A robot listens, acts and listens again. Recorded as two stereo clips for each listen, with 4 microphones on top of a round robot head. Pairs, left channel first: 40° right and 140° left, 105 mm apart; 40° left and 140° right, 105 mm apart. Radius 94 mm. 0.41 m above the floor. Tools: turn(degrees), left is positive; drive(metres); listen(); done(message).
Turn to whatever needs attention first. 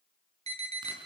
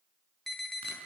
turn(degrees=125)
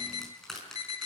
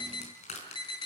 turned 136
turn(degrees=-10)
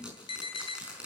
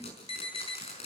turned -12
done("Facing the alarm, 2 to 4 m away.")